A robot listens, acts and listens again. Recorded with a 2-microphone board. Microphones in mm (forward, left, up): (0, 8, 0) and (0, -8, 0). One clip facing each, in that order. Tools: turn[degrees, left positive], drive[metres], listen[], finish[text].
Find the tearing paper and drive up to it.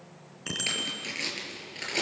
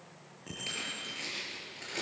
Thought: The tearing paper: about 40° left or 140° left.
Action: turn[40]
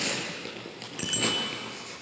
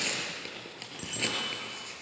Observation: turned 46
Action: drive[1.0]
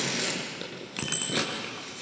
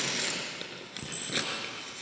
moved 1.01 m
Action: drive[1.0]
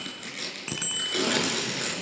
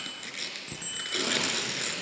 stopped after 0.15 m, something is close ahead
Action: finish[Something is in my way. I am facing the tearing paper but have not reached it.]